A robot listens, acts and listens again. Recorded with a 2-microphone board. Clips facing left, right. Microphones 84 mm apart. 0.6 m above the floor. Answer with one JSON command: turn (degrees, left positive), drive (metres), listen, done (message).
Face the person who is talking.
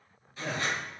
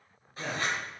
{"turn": -55}
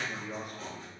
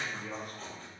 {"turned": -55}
{"turn": -65}
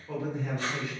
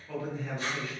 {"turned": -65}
{"turn": 25}
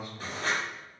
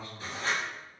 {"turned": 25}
{"turn": 15}
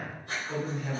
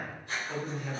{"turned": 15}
{"done": "Facing the man speaking, 1 to 2 m away."}